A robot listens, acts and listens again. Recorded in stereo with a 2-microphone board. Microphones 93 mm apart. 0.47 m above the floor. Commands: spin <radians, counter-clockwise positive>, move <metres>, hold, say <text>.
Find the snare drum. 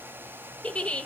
hold
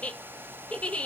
hold
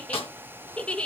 spin 1.22
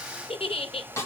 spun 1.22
spin 0.52
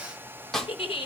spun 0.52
say Facing the snare drum, 2 to 4 m away.